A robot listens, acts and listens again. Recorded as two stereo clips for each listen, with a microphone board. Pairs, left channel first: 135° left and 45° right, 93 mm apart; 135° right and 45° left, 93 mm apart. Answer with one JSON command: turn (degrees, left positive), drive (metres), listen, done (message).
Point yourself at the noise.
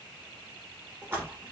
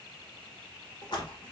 {"turn": -110}
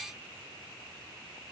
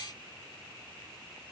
{"done": "Facing where the splash came from. I can't hear it now."}